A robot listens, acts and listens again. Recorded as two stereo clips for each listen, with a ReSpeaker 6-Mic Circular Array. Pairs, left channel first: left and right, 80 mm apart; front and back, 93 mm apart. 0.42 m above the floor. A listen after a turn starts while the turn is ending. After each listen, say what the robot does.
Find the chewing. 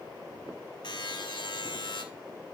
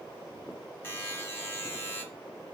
Keep listening.
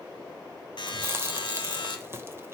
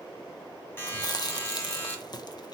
Turn 35° right.
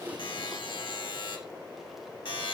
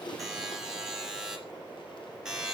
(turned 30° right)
Keep listening.
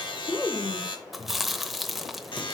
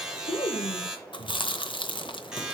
Found it: chewing, straight ahead, under 1 m away.